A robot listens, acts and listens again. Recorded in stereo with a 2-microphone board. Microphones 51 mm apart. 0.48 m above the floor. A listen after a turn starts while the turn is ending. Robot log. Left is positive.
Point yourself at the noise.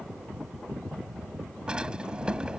note: The drawer: about 20° right or 160° right.
cmd yaw -20
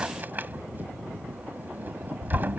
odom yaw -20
note: So it is at 140° right.
cmd yaw -140
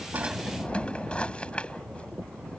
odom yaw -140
note: The drawer is now 25° left.
cmd yaw +25
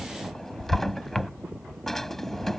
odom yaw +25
note: The drawer is now 10° left.
cmd yaw +10
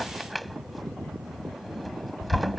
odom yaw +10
end: Found it: a drawer, straight ahead.